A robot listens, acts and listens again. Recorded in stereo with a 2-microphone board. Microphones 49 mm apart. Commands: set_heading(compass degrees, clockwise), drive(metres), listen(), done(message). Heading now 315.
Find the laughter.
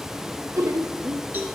set_heading(45)
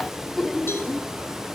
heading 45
done("Facing the laughter, 1 to 2 m away.")